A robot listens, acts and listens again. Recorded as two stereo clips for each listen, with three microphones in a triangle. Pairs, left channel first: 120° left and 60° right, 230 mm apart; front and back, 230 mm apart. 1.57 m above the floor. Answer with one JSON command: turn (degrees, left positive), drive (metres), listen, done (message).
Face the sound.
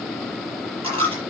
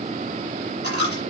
{"done": "Found it: a dropped coin, straight ahead."}